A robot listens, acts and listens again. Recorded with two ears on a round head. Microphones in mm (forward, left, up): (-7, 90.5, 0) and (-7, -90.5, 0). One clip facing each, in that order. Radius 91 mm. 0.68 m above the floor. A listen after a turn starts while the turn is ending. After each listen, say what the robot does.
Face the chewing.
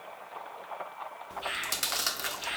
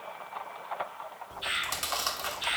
Turn 20° left.
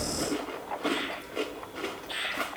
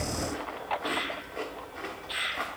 Turn 135° left.
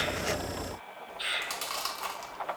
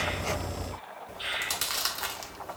Turn 20° right.
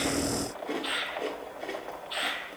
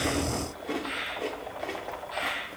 Found it: chewing, straight ahead, 1 to 2 m away.